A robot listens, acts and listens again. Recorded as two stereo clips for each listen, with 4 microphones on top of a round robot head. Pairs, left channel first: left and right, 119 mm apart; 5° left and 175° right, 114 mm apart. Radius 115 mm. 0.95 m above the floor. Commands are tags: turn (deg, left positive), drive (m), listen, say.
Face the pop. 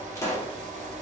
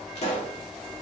<turn deg="25"/>
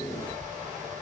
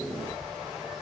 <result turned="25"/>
<say>I heard a pop from this way, but can't make it out now.</say>